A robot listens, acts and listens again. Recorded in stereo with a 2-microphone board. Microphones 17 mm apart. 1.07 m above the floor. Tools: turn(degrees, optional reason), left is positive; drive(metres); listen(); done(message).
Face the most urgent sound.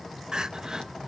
turn(degrees=-50, reason="The crying: about 50° right or 130° right.")
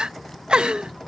turn(degrees=-75, reason="So it is at 75° right.")
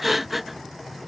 turn(degrees=-10, reason="The crying is now 10° right.")
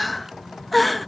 done("Facing the crying.")